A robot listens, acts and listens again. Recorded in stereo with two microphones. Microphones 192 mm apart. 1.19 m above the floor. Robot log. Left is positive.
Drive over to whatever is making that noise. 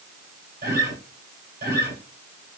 note: The guitar: about 55° right or 125° right.
cmd yaw -55
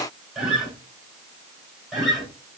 cmd fwd 1.0
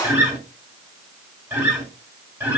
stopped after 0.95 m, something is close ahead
note: The guitar is now 15° right.
cmd yaw -15
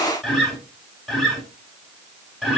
end: I am next to the guitar.